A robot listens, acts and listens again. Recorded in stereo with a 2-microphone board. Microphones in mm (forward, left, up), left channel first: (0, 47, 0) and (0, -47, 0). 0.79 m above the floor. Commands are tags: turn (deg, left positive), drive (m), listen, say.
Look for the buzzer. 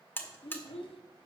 <turn deg="20"/>
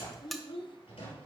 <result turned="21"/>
<say>Facing the buzzer.</say>